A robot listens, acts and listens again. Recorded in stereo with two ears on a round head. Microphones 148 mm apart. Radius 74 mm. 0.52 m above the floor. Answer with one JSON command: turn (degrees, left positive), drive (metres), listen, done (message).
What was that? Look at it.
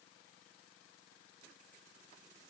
{"listen": true}
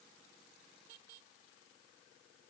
{"listen": true}
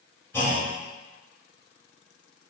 {"turn": 30}
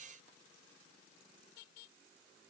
{"listen": true}
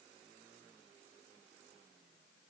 {"done": "I heard a clunk, but can't make it out now. It was about 15° right or 135° left."}